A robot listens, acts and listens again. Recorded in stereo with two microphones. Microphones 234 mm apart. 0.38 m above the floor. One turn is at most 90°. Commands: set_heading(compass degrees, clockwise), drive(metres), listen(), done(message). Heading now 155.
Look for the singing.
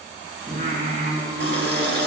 set_heading(200)
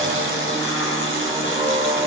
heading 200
set_heading(210)
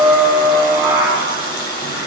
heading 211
done("Facing the singing, over 4 m away.")